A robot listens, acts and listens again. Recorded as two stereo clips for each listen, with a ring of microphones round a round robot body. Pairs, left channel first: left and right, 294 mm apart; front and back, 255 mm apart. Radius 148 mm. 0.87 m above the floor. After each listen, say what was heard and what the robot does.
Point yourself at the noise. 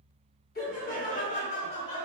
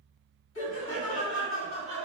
The laughter: 20° left. Turn 20° left.
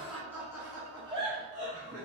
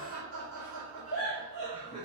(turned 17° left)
The laughter is now 35° right. Turn 35° right.
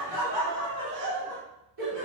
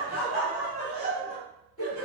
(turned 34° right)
The laughter is now 35° right. Turn 35° right.
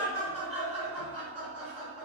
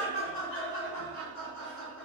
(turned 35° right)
The laughter is now 10° right. Turn 10° right.
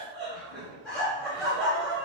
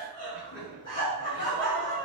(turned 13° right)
Facing the laughter, 1 to 2 m away.